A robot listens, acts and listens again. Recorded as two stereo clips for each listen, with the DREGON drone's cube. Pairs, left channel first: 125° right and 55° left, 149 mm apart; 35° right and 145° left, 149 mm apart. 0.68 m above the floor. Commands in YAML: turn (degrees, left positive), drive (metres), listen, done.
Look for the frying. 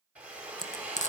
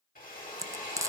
turn: -150
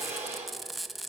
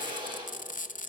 turn: -35
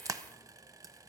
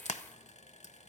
done: "Found it: frying, straight ahead, under 1 m away."